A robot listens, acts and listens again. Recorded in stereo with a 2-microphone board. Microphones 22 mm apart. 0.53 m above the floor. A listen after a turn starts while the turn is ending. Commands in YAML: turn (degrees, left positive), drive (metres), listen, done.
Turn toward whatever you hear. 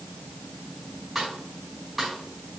turn: -30
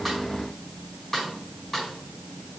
turn: 20
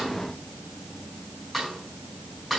done: "Found it: a snare drum, straight ahead, over 4 m away."